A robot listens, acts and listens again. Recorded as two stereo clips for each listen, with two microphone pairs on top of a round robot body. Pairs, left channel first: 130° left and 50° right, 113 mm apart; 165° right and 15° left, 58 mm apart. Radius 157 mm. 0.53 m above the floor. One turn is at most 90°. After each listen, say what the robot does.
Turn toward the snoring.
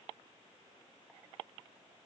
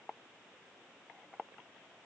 Keep listening.
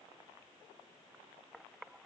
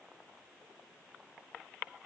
Keep listening.
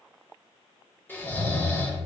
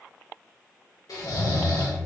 Turn 90° right.
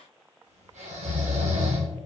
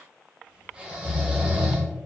Turn 55° right.
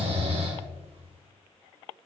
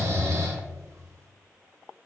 Turn 15° right.
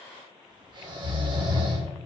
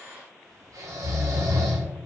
Found it: snoring, straight ahead.